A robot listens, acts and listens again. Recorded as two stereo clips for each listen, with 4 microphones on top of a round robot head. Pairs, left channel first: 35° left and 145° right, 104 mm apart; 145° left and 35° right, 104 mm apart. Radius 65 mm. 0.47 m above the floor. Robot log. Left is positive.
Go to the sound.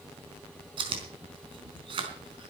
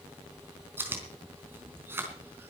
note: The chewing: 105° right.
cmd yaw -105
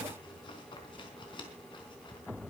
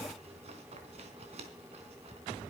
note: The chewing is now 10° right.
cmd yaw -10
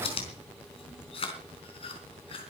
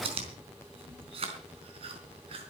cmd fwd 1.0
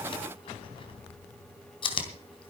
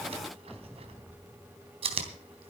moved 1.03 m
cmd fwd 1.0
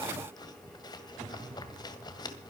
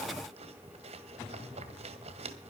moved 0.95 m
note: The chewing is now 15° right.
cmd yaw -15
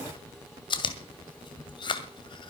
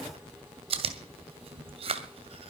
cmd fwd 1.0
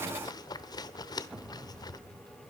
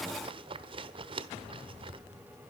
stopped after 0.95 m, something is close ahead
note: The chewing is now 10° right.
cmd yaw -10
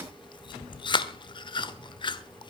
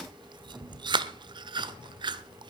end: Arrived at the chewing, straight ahead.